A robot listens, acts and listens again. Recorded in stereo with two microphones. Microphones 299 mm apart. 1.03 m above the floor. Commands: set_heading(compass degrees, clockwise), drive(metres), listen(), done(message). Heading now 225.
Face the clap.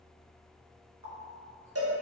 listen()
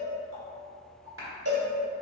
set_heading(270)
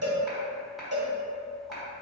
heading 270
listen()
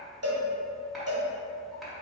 listen()
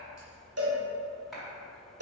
done("I heard a clap, but can't make it out now. It was about straight ahead or 90° right.")